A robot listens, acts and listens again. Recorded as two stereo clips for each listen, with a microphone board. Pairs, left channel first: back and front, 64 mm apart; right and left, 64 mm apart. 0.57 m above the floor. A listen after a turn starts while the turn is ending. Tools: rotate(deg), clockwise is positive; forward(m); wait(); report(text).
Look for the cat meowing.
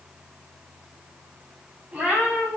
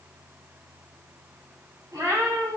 rotate(-65)
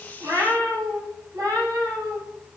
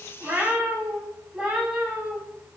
rotate(-15)
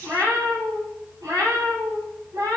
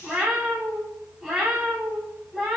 report("Found it: a cat meowing, straight ahead.")